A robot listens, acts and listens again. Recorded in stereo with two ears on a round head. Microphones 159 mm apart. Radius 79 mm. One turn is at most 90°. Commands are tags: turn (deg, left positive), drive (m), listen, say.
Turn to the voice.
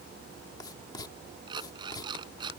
<listen/>
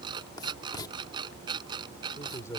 <turn deg="15"/>
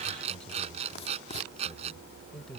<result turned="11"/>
<turn deg="30"/>
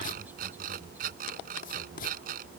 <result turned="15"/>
<listen/>
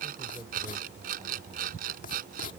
<turn deg="-30"/>
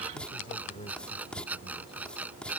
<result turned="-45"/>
<turn deg="30"/>
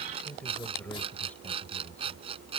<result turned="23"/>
<turn deg="10"/>
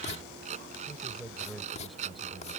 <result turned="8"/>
<say>Facing the man speaking.</say>